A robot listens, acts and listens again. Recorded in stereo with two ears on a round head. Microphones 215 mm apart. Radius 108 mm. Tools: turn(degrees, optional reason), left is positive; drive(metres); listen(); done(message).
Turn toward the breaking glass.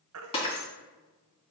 turn(degrees=25, reason="The breaking glass: about 25° left or 155° left.")
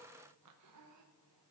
listen()
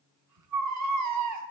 done("I heard breaking glass, but can't make it out now. It was about straight ahead or 130° left.")